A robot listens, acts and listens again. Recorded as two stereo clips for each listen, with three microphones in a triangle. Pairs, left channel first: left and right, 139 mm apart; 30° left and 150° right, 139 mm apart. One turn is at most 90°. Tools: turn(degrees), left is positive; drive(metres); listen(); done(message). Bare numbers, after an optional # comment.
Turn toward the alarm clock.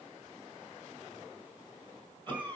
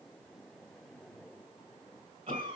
listen()
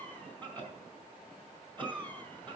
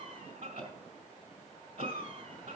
listen()
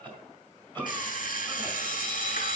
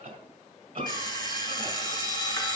# The alarm clock: 90° left.
turn(90)
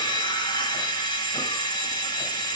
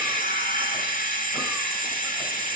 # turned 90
# The alarm clock is now 35° left.
turn(35)
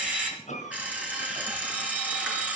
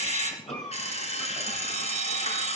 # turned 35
# The alarm clock is now 10° right.
turn(-10)
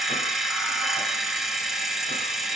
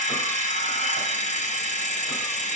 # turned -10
done("Found it: an alarm clock, straight ahead.")